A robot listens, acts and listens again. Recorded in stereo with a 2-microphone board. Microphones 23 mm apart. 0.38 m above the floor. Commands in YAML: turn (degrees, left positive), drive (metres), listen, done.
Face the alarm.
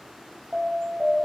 turn: -40
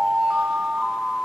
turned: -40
turn: -90
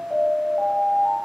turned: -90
done: "Found it: an alarm, straight ahead."